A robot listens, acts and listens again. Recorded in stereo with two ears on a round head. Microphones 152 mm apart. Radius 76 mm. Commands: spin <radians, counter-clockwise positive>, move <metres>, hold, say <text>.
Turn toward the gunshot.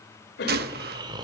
spin -1.05
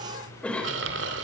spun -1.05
hold
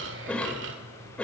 say I heard a gunshot, but can't make it out now. It was about straight ahead or 60° right.